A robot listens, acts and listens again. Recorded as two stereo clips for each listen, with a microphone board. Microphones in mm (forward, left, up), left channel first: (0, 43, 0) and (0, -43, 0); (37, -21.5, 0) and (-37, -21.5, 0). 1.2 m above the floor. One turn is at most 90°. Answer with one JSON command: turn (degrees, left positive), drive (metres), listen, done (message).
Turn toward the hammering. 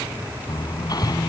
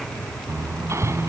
{"turn": 90}
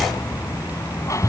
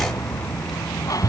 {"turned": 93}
{"turn": 40}
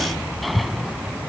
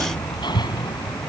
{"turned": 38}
{"done": "Facing the hammering."}